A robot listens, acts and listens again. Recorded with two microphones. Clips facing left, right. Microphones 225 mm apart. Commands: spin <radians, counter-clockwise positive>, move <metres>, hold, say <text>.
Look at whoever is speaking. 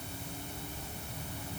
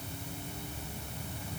hold
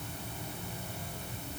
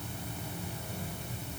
hold
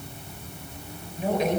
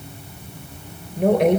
spin -1.13
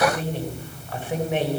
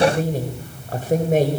spin -0.79
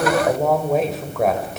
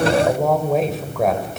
say Facing the woman speaking.